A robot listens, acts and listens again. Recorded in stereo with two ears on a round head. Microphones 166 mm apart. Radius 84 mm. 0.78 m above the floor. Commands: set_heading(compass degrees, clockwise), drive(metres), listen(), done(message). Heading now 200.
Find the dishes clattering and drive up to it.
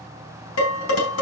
set_heading(110)
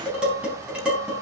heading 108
drive(1.0)
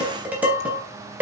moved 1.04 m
drive(1.0)
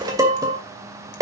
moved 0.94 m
set_heading(123)
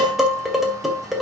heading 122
drive(1.0)
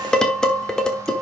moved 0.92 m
drive(1.0)
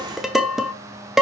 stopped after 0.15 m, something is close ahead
done("Arrived at the dishes clattering, straight ahead.")